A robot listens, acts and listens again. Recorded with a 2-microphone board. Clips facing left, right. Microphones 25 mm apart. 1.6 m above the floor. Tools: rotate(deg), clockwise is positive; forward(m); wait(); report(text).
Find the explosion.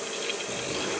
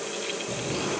rotate(-30)
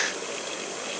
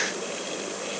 wait()
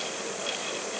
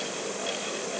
report("I heard an explosion, but can't make it out now. It was about 20° right or 140° left.")